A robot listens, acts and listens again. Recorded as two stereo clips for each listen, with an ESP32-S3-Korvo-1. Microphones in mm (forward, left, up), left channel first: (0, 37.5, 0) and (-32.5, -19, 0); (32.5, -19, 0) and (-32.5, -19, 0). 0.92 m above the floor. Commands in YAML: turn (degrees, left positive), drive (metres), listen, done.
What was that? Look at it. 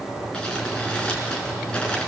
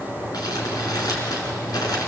turn: -15
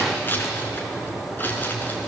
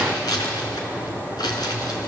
done: "Found it: crumpling, straight ahead."